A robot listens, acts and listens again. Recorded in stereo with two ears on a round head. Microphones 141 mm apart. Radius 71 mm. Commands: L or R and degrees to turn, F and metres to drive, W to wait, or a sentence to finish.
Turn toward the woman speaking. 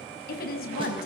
L65
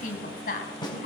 L55
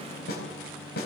W
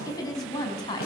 L25
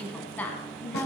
L15
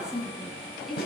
Found it: a woman speaking, straight ahead, over 4 m away.